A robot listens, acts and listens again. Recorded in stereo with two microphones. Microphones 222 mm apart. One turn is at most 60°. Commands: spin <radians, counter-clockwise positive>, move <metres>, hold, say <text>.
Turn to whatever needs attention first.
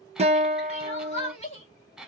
spin 0.52
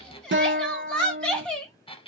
say Facing the crying.